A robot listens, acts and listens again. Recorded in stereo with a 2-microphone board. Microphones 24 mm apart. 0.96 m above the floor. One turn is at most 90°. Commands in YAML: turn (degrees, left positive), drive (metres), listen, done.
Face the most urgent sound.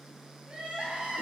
turn: -55
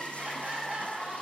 turn: -65
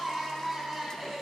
turn: -15
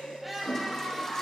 done: "Found it: crying, straight ahead."